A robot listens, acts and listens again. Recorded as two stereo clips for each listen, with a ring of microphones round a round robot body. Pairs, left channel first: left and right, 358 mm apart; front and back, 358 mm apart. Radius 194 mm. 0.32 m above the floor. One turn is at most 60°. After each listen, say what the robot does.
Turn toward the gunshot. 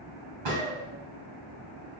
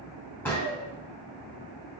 Turn 60° right.
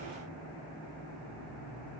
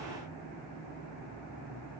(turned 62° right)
Turn 25° right.
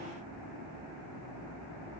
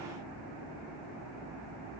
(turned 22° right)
Facing where the gunshot came from. I can't hear it now.